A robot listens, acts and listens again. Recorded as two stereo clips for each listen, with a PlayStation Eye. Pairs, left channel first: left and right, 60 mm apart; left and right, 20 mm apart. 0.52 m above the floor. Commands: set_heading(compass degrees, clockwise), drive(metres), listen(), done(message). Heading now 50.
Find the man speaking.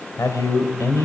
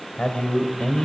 set_heading(345)
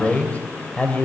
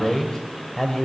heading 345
set_heading(320)
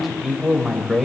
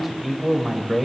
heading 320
done("Found it: a man speaking, straight ahead, 2 to 4 m away.")